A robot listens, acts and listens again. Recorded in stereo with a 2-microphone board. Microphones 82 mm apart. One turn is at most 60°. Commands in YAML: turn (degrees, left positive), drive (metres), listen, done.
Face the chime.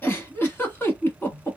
listen: true
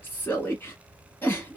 listen: true
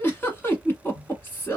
done: "I can't make out a chime to turn to."